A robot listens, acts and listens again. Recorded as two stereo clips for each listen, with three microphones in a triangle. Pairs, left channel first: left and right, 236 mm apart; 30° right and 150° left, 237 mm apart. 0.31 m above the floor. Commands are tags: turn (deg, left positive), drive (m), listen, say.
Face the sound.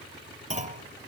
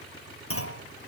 <turn deg="-30"/>
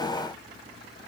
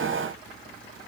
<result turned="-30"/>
<say>Facing where the clunk came from. I can't hear it now.</say>